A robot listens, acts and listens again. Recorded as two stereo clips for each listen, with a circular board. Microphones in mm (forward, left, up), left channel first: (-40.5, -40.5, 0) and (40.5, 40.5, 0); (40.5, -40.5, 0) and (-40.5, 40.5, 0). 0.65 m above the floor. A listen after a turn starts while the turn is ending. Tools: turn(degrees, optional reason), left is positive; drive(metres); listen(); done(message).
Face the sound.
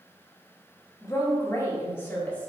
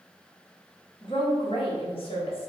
turn(degrees=-60, reason="The woman speaking: 60° right.")
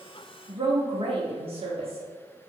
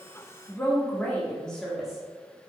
turn(degrees=45, reason="The woman speaking is now 45° left.")
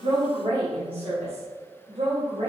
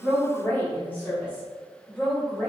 turn(degrees=40, reason="The woman speaking is now 40° left.")
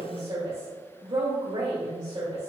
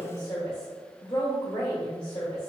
done("Found it: a woman speaking, straight ahead, 1 to 2 m away.")